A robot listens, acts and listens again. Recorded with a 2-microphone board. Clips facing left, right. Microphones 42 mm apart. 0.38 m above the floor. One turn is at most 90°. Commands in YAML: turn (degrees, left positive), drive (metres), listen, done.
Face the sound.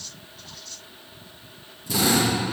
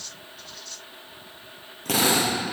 turn: -75
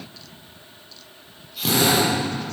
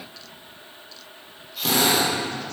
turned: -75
done: "Found it: a drill, straight ahead, over 4 m away."